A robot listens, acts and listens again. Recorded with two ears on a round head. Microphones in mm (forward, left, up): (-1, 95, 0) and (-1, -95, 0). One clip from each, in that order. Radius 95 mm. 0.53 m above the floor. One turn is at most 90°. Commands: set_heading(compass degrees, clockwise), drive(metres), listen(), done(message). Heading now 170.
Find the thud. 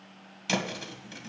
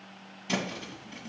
set_heading(80)
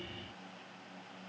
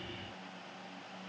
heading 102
set_heading(82)
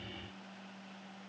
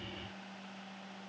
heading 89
set_heading(79)
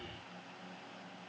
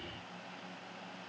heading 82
done("I heard a thud from this way, but can't make it out now.")